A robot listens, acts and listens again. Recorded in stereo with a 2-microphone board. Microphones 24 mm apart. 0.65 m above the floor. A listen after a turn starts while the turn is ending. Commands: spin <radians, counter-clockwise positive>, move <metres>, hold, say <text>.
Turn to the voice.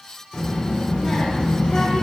spin 0.87
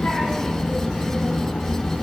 spin 1.40
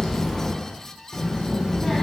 say Found it: a child speaking, straight ahead, 1 to 2 m away.